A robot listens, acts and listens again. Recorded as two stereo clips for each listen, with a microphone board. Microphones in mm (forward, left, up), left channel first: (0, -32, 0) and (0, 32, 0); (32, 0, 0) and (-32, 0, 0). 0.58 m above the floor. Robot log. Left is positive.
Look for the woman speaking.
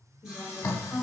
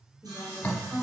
note: The woman speaking: 140° right.
cmd yaw -140
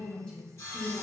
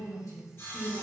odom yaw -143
note: The woman speaking is now 35° right.
cmd yaw -35
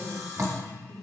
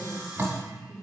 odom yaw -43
note: The woman speaking is now 30° right.
cmd yaw -30
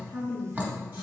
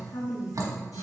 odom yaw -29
note: The woman speaking is now 20° right.
cmd yaw -20
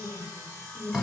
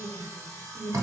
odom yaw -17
note: The woman speaking is now 15° right.
cmd yaw -15
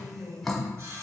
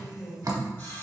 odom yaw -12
end: Found it: a woman speaking, straight ahead, 2 to 4 m away.